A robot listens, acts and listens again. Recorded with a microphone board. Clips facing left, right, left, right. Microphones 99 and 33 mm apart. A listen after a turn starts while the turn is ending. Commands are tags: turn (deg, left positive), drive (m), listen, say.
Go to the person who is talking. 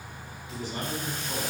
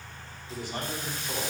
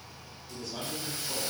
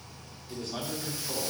<turn deg="-75"/>
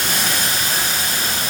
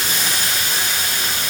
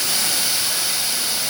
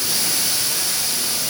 <listen/>
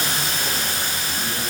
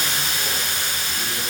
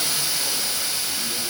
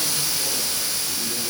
<listen/>
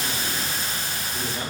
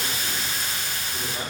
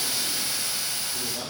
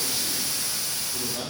<turn deg="-15"/>
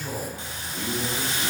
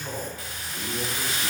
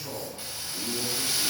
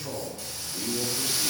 <drive m="1.0"/>
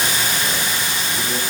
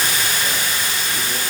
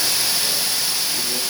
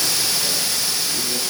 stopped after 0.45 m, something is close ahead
<listen/>
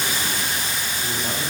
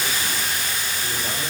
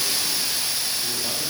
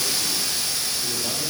<listen/>
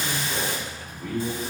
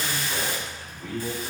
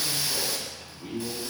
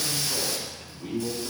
<say>Blocked. The man speaking is further on, straight ahead.</say>